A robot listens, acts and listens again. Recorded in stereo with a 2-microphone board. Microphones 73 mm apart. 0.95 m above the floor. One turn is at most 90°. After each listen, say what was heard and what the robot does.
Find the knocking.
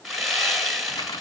Keep listening.
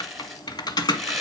Keep listening.
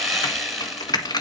I can't make out knocking, only sawing and typing on a keyboard.